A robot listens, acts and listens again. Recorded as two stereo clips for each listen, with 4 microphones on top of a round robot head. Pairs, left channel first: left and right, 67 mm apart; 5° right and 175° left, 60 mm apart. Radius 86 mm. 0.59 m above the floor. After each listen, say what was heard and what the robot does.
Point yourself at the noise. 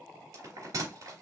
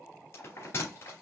The bell: 50° right. Turn 50° right.
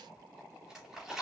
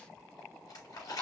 Facing the bell, 2 to 4 m away.